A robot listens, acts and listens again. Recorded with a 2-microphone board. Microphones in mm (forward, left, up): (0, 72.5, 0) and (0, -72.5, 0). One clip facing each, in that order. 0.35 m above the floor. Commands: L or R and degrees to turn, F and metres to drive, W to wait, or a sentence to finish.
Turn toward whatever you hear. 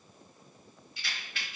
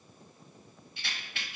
R25
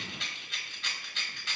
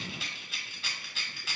Found it: a rattle, straight ahead.